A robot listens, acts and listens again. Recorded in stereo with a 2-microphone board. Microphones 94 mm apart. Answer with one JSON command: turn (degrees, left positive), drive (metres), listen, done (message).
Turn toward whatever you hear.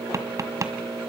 {"turn": -35}
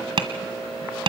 {"turn": -110}
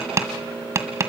{"turn": -30}
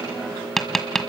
{"done": "Facing the tapping, 1 to 2 m away."}